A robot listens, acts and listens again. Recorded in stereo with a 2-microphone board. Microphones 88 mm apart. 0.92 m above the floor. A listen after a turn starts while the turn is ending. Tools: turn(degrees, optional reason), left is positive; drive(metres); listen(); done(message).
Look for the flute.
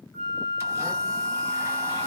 turn(degrees=20, reason="The flute: about 20° left or 160° left.")
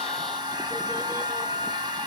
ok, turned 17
done("Found it: a flute, straight ahead.")